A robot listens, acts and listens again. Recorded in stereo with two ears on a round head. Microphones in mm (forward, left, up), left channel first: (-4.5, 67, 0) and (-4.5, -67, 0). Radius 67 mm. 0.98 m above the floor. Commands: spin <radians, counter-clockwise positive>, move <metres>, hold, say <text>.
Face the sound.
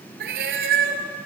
spin -1.31
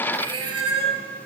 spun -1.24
spin -0.61
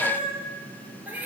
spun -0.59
spin -0.17
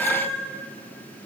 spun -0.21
say Found it: a cat meowing, straight ahead.